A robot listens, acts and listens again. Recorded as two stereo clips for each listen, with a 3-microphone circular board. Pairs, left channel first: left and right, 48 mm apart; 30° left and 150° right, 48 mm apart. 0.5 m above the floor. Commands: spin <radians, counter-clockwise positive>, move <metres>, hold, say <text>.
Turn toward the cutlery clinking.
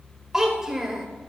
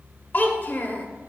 hold
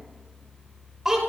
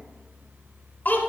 hold
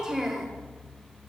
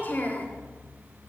say I can't make out cutlery clinking, only a child speaking.